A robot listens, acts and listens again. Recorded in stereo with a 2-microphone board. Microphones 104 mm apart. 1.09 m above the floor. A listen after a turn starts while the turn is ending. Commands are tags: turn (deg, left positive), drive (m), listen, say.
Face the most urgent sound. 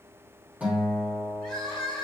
<turn deg="30"/>
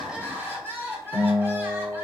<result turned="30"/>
<turn deg="-25"/>
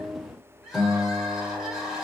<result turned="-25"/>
<say>Facing the crying, 2 to 4 m away.</say>